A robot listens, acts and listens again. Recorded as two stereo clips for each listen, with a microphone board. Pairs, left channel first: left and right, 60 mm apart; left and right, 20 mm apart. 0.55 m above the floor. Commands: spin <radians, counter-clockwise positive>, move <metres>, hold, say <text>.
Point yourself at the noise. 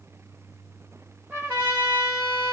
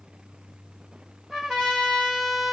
spin -0.44
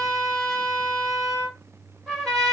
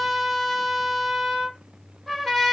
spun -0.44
say Facing the trumpet, 2 to 4 m away.